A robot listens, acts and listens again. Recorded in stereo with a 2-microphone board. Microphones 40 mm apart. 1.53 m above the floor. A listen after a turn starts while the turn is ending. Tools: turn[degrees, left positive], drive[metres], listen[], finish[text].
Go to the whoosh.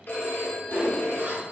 Thought: The whoosh: about 60° right or 120° right.
Action: turn[-60]
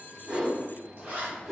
Thought: So it is at 10° right.
Action: turn[-10]
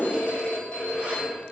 Action: listen[]
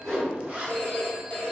Action: drive[1.0]
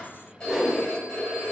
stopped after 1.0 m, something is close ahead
Action: finish[Arrived at the whoosh, straight ahead.]